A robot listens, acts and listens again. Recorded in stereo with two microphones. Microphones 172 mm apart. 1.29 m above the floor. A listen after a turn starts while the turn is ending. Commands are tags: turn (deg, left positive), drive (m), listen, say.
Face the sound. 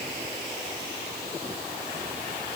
<listen/>
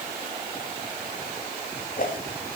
<turn deg="50"/>
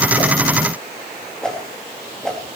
<say>Found it: a whoosh, straight ahead, 2 to 4 m away.</say>